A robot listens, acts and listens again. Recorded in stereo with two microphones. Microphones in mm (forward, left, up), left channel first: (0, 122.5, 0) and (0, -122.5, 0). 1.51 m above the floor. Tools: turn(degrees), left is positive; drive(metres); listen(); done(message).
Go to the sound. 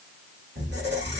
turn(degrees=-45)
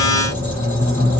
turn(degrees=-85)
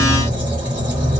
turn(degrees=-20)
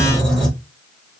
drive(metres=1.0)
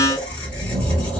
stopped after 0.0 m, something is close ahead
done("Something is in my way. I am facing the squeak but have not reached it.")